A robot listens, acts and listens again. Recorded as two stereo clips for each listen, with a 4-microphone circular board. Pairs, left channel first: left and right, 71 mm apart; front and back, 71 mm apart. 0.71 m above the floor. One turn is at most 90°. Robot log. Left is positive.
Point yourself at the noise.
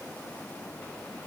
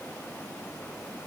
cmd idle
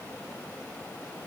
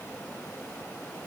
cmd idle
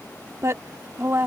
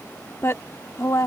note: The woman speaking: 40° right.
cmd yaw -40
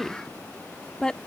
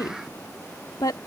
note: The woman speaking is now 15° left.
cmd yaw +15
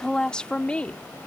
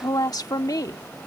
note: The woman speaking is now 20° left.
cmd yaw +20
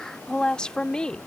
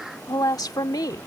note: The woman speaking is now 15° left.
cmd yaw +15
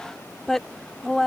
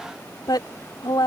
end: Facing the woman speaking.